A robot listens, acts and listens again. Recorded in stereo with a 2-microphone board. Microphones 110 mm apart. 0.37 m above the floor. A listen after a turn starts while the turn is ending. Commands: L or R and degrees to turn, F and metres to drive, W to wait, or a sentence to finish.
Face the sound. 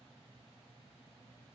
W
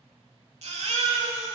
R90
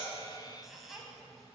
W
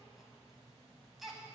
Found it: a baby crying, straight ahead.